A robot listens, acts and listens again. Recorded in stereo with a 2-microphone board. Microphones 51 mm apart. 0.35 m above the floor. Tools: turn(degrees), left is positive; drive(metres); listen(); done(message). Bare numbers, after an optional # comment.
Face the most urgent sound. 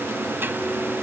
listen()
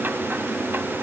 listen()
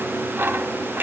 done("I can't make out anything urgent to turn to.")